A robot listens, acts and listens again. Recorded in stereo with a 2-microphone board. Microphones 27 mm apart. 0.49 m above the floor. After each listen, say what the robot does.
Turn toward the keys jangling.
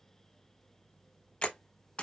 Keep listening.
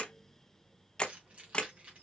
Turn 45° right.
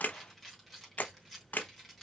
Facing the keys jangling, 2 to 4 m away.